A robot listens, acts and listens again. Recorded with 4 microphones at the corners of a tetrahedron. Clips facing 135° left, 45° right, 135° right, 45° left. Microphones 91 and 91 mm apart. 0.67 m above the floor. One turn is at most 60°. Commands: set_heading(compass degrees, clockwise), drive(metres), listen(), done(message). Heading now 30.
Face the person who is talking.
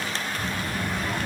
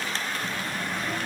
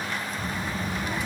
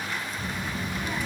set_heading(330)
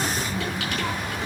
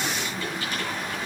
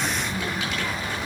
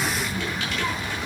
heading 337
set_heading(277)
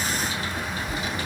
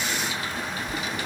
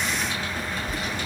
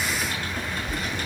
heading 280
set_heading(245)
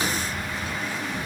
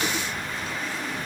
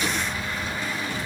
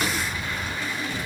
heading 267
set_heading(247)
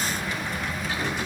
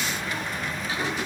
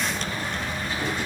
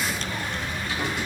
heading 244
done("Facing the child speaking, over 4 m away.")